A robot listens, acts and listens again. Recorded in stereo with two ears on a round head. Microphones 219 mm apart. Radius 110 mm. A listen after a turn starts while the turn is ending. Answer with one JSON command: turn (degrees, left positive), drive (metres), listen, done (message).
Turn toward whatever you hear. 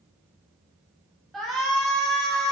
{"turn": 30}
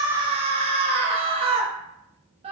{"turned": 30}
{"turn": -25}
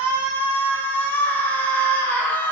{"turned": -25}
{"turn": 10}
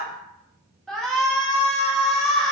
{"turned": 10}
{"done": "Found it: a shout, straight ahead, under 1 m away."}